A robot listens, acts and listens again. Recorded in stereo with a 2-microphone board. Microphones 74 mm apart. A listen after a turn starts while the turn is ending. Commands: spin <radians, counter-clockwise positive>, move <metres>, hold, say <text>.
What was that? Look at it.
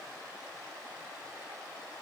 hold
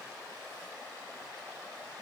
hold
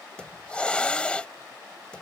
spin 0.26
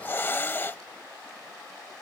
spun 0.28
spin 2.62
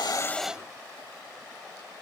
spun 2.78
spin -0.17
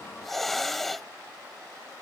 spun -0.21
say Found it: a hiss, straight ahead.